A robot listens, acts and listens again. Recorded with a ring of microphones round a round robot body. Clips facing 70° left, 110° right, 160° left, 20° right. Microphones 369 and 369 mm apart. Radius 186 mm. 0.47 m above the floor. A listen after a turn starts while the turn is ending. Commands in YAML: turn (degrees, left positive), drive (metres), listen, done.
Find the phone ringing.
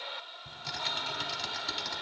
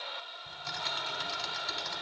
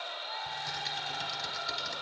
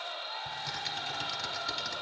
listen: true
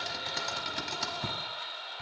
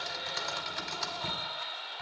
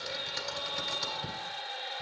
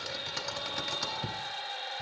listen: true
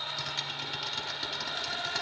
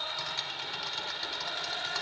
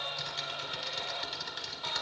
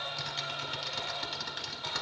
done: "I can't make out a phone ringing to turn to."